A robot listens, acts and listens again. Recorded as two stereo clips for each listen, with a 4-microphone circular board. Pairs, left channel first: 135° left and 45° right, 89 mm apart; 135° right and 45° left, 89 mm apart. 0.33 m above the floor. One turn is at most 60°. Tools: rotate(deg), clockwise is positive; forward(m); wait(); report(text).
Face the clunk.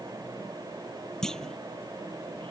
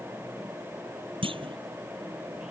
rotate(-50)
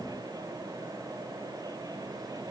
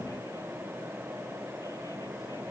report("I heard a clunk from this way, but can't make it out now.")